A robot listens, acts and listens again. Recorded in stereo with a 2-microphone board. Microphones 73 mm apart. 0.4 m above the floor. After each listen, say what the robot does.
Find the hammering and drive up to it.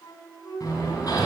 Turn 55° left.
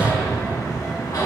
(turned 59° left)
Turn 60° left.
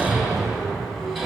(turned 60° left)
Drive 1.0 m forward.
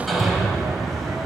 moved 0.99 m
Drive 1.0 m forward.
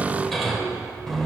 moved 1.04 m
Drive 1.0 m forward.
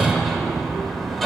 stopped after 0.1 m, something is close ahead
Arrived at the hammering, straight ahead.